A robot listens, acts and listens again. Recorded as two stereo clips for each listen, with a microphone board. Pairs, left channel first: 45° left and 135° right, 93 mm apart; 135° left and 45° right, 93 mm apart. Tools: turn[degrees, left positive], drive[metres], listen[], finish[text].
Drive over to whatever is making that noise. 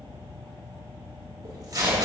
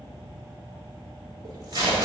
Thought: The tape being pulled: 85° right.
Action: turn[-85]
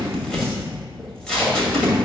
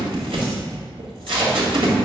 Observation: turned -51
Thought: The tape being pulled is now 35° right.
Action: turn[-35]
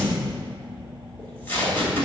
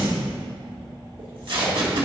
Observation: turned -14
Thought: The tape being pulled is now 20° right.
Action: turn[-20]
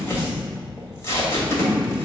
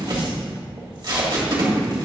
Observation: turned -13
Thought: The tape being pulled is now 10° right.
Action: turn[-10]
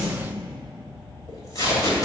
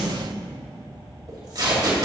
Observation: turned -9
Action: drive[1.0]
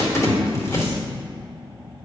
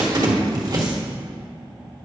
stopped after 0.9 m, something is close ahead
Action: finish[I am next to the tape being pulled.]